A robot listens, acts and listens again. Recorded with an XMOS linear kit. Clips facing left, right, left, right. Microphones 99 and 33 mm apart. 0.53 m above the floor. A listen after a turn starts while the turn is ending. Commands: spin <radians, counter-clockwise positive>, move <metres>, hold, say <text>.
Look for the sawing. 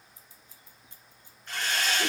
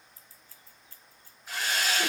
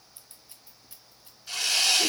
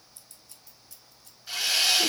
spin -0.52
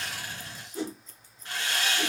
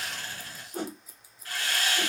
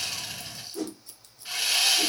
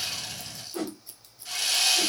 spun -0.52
spin 0.44
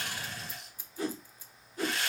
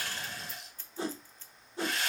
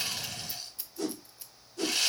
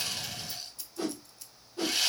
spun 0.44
say Found it: sawing, straight ahead, 2 to 4 m away.